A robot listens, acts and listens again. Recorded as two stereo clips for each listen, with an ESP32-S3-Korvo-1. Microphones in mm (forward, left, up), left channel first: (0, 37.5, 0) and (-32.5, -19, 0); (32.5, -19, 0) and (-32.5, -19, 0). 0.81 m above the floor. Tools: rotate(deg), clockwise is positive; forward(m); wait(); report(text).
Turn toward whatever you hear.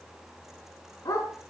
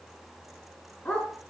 rotate(-70)
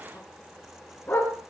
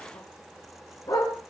report("Found it: a dog barking, straight ahead, over 4 m away.")